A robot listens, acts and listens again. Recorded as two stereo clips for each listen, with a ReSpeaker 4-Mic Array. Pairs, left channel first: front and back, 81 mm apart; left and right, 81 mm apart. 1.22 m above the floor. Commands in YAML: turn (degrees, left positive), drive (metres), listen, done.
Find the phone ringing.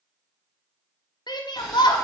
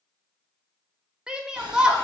listen: true
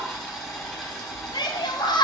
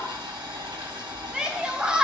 listen: true
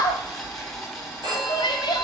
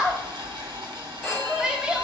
turn: 175
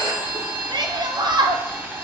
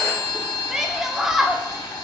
turn: 10
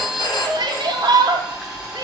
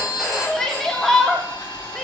done: "Found it: a phone ringing, straight ahead, 1 to 2 m away."